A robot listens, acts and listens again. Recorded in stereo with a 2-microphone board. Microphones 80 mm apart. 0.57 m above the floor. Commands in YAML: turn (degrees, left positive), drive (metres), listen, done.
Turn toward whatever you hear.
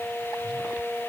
listen: true
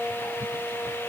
listen: true
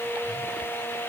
done: "I can't make out anything to turn to."